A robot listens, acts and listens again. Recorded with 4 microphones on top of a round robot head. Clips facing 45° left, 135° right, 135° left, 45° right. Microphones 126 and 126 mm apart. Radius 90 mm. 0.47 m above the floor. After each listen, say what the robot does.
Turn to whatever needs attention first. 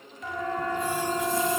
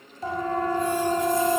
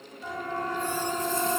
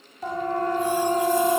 Turn 80° right.
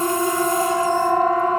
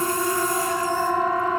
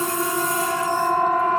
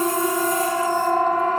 Facing the siren, over 4 m away.